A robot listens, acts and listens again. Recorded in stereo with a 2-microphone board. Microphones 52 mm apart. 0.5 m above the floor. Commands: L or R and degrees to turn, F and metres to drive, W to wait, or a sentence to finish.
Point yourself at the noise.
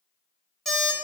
R30
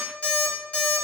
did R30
L25
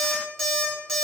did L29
Facing the alarm clock.